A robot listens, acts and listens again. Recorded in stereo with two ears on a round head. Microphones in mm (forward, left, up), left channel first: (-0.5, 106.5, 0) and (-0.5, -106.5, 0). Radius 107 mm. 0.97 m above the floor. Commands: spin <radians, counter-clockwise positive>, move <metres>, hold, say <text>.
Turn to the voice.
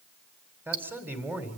spin -0.52
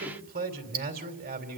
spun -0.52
spin -2.44
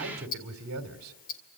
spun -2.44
spin -1.13
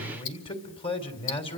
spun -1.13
spin 0.44
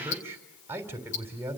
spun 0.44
spin -0.17
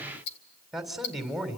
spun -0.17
say Found it: a man speaking, straight ahead.